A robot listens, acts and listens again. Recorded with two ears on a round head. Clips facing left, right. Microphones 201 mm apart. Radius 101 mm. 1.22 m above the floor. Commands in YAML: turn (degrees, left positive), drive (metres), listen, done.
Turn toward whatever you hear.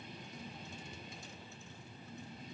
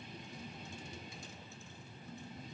listen: true
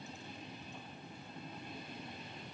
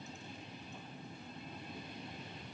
listen: true
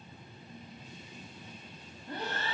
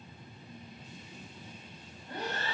turn: 65
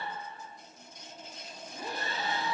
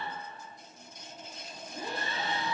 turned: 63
done: "Facing the breathing, 1 to 2 m away."